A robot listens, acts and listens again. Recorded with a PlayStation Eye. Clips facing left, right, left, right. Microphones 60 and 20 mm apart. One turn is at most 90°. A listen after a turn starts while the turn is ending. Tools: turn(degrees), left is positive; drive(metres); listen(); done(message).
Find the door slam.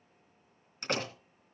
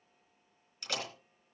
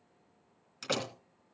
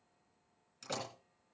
turn(degrees=50)
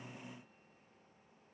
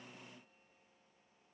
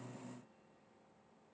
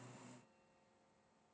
listen()
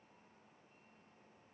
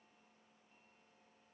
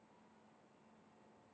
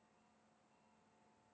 done("I heard a door slam, but can't make it out now. It was about straight ahead or 80° left.")